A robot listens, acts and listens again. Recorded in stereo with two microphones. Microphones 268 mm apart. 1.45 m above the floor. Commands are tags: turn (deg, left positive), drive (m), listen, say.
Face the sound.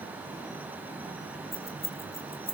<turn deg="30"/>
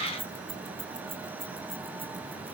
<turn deg="-20"/>
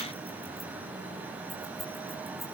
<listen/>
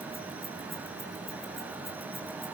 <listen/>
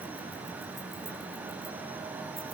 <say>I heard keys jangling from this way, but can't make it out now.</say>